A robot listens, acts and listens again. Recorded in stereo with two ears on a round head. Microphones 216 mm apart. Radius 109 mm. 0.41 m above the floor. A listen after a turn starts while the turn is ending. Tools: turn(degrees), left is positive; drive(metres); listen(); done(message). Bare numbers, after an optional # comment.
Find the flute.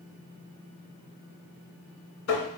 listen()
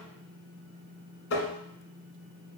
listen()
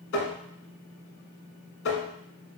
done("I can't make out a flute, only tapping.")